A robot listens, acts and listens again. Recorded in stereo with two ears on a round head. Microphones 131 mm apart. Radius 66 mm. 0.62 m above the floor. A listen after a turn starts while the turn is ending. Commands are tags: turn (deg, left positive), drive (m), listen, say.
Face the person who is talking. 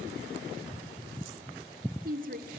<turn deg="-65"/>
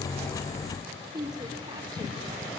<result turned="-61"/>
<turn deg="-35"/>
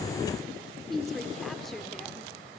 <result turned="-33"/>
<say>Facing the woman speaking, 1 to 2 m away.</say>